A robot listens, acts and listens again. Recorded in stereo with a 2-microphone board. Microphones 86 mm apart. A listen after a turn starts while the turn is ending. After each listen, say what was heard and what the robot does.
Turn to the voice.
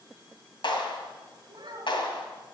The child speaking: about 60° right or 120° right. Turn 60° right.
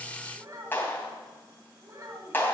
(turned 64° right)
So it is at 45° right. Turn 45° right.
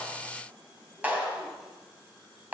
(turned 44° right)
Keep listening.
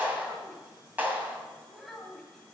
Found it: a child speaking, straight ahead, 2 to 4 m away.